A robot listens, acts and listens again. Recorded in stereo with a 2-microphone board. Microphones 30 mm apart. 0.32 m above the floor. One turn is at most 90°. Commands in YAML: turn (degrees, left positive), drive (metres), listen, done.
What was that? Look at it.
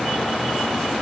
listen: true
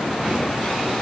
listen: true
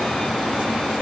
done: "I can't make out anything."